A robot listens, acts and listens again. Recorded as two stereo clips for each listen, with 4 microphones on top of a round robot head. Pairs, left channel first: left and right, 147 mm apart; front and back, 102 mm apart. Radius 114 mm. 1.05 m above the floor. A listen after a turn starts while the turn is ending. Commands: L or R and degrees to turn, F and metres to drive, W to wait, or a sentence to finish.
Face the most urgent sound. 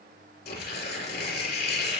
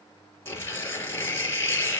W
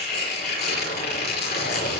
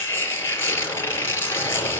W
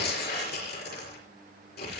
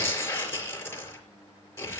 I can't make out anything urgent to turn to.